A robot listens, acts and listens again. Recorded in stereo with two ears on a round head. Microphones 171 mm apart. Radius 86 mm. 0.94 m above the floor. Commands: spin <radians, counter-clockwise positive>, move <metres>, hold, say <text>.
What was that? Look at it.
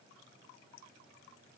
hold
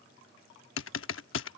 spin 1.22
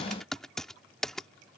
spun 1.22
say Found it: typing on a keyboard, straight ahead.